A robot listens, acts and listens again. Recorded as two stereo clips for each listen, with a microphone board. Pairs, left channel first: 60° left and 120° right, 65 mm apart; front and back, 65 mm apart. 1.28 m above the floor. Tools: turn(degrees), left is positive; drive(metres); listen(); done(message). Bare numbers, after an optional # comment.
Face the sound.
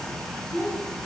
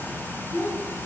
# The child speaking: 25° left.
turn(25)
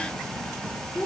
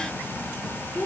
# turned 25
# The child speaking is now 30° left.
turn(30)
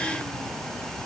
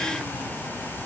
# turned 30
listen()
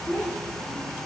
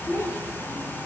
# The child speaking is now 30° left.
turn(30)
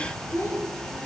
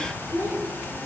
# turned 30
# The child speaking is now 15° left.
turn(15)
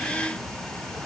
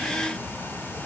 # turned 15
listen()
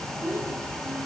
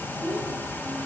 # The child speaking is now 15° left.
turn(15)
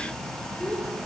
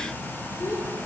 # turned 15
listen()
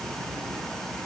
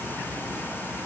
listen()
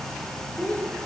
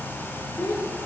done("Found it: a child speaking, straight ahead.")